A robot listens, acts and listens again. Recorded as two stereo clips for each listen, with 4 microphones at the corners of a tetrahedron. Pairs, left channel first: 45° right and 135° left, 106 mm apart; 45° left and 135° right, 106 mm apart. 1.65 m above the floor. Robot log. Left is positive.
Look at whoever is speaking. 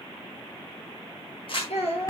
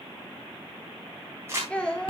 note: The child speaking: 35° right.
cmd yaw -35
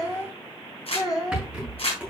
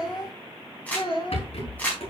note: The child speaking is now 10° left.
cmd yaw +10
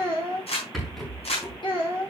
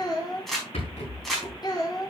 end: Found it: a child speaking, straight ahead, 2 to 4 m away.